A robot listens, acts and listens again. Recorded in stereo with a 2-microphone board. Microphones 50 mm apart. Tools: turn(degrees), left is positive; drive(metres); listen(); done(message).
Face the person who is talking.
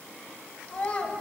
turn(degrees=30)
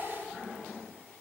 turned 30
listen()
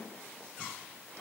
listen()
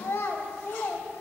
turn(degrees=115)
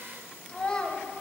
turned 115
turn(degrees=20)
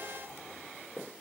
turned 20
listen()
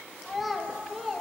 done("Found it: a child speaking, straight ahead.")